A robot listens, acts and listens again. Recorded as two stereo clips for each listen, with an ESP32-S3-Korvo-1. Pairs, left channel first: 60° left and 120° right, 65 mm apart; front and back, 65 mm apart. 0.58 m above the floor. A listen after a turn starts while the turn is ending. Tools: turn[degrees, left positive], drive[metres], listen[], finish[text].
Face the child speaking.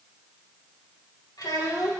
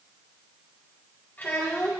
Thought: The child speaking: 60° left.
Action: turn[60]
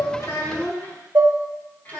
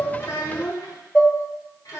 Action: finish[Found it: a child speaking, straight ahead.]